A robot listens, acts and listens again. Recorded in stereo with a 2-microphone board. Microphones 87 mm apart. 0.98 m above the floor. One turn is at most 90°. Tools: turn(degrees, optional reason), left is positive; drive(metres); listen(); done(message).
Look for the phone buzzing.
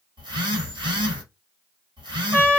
turn(degrees=-65, reason="The phone buzzing: about 65° right or 115° right.")
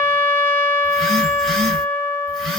done("Found it: a phone buzzing, straight ahead, 1 to 2 m away.")